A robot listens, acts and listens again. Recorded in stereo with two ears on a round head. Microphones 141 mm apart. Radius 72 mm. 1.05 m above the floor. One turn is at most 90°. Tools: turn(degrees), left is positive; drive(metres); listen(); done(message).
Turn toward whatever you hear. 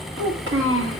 turn(degrees=-90)
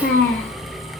turn(degrees=15)
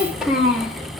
done("Facing the child speaking.")